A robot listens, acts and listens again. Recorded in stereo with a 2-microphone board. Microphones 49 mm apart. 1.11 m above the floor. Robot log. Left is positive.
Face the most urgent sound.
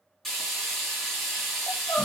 note: The crying: about 75° left or 105° left.
cmd yaw +75
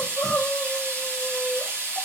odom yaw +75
end: Facing the crying.